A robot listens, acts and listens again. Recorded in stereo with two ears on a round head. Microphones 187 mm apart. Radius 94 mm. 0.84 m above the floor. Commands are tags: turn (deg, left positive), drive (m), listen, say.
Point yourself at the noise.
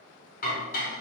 <turn deg="45"/>
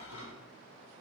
<turn deg="95"/>
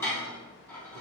<turn deg="10"/>
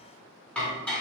<say>Facing the dishes clattering, over 4 m away.</say>